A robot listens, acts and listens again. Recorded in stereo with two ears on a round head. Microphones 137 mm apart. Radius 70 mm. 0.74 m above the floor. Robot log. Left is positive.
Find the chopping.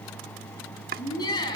note: The chopping: about 60° right or 120° right.
cmd yaw -60
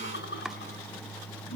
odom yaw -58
cmd idle
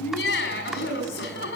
cmd idle
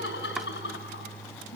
end: I heard chopping, but can't make it out now. It was about straight ahead or 60° right.